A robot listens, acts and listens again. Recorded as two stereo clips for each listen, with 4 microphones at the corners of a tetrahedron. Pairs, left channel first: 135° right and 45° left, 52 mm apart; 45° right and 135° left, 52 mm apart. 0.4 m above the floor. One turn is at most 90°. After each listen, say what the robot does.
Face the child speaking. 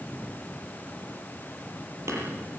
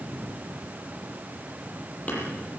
Keep listening.
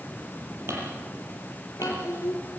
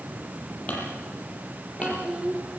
Turn 90° right.
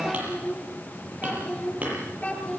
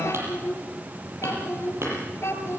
Turn 75° right.
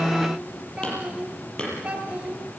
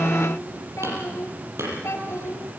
Turn 25° right.
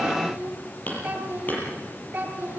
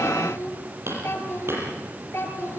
Turn 15° right.
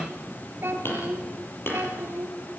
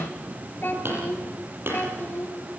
Found it: a child speaking, straight ahead, over 4 m away.